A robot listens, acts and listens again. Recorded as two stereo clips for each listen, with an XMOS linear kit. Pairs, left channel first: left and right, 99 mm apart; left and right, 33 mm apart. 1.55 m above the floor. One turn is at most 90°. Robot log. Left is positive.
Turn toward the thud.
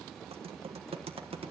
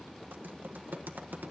cmd idle
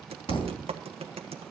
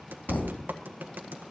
note: The thud: about 65° left or 115° left.
cmd yaw +65
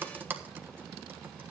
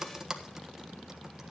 cmd idle
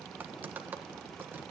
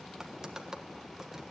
end: I heard a thud, but can't make it out now. It was about straight ahead or 50° left.